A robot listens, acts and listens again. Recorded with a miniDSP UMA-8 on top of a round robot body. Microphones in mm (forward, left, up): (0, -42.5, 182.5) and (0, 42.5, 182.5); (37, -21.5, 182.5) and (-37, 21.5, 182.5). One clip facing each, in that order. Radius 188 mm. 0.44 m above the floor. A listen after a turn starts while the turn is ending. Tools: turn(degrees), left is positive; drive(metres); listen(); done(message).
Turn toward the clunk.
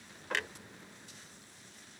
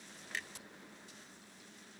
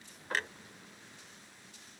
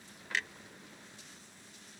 turn(degrees=-75)
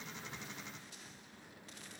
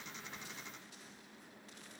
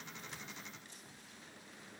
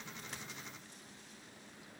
done("Facing where the clunk came from. I can't hear it now.")